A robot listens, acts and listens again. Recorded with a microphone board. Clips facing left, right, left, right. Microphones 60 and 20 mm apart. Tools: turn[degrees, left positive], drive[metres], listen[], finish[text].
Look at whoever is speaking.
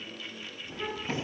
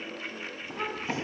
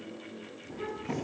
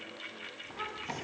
Thought: The child speaking: about 75° right or 105° right.
Action: turn[-75]
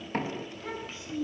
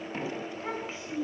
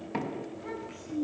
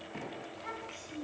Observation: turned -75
Thought: So it is at 30° right.
Action: turn[-30]
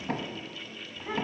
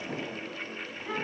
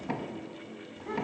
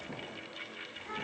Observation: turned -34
Action: finish[Found it: a child speaking, straight ahead.]